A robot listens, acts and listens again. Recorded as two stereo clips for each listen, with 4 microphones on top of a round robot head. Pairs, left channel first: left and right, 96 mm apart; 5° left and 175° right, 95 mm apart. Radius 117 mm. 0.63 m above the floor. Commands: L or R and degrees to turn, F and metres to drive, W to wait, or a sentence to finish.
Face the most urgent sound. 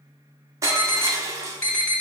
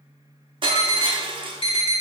L25
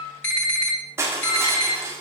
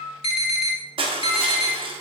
L20
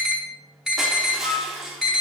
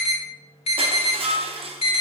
Found it: an alarm, straight ahead.